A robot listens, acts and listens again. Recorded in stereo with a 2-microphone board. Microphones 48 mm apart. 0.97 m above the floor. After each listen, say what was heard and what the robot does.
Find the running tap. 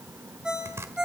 Keep listening.
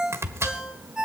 Keep listening.
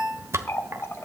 The running tap: about 65° left or 115° left. Turn 65° left.
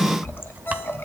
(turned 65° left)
So it is at 50° left. Turn 50° left.
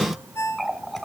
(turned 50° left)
Found it: a running tap, straight ahead, 1 to 2 m away.